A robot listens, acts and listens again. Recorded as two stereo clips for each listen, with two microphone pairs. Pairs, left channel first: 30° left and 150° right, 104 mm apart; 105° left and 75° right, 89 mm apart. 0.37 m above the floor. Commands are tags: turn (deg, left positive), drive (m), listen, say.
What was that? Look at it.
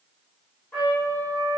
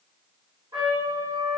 <turn deg="-45"/>
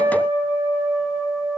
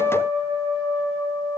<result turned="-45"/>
<say>Facing the trumpet.</say>